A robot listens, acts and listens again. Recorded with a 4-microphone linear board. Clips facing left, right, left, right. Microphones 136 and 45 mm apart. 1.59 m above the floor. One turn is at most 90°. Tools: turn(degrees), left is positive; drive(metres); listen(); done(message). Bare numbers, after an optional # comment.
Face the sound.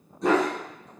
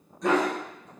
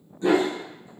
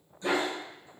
# The dog barking: about 30° left or 150° left.
turn(30)
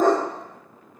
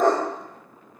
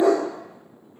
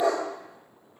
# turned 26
# The dog barking: about 20° left or 160° left.
turn(20)
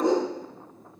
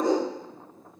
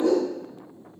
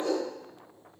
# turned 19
# The dog barking: about 20° left or 160° left.
turn(20)
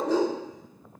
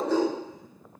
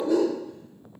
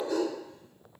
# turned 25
# So it is at 15° left.
turn(15)
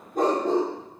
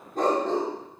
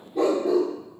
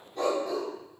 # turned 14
# The dog barking is now 15° left.
turn(15)
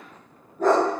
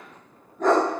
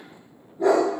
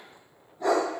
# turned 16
# The dog barking is now 10° left.
turn(10)
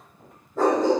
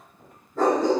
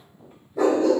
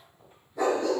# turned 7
done("Facing the dog barking, 2 to 4 m away.")